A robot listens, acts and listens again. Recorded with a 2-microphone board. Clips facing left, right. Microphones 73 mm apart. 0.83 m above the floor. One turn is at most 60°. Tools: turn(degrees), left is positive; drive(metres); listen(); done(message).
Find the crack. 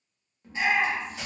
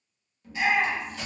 turn(degrees=20)
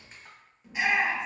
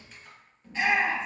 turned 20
turn(degrees=60)
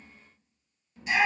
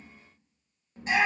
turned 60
turn(degrees=60)
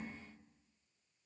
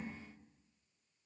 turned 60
turn(degrees=20)
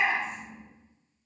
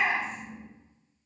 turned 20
done("I heard a crack from this way, but can't make it out now.")